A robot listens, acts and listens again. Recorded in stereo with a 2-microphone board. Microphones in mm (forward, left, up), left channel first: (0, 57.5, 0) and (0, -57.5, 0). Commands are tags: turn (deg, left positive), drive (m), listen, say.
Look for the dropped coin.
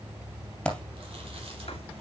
<turn deg="30"/>
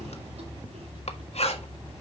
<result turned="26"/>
<listen/>
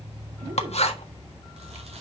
<say>I heard a dropped coin, but can't make it out now. It was about 15° right or 145° left.</say>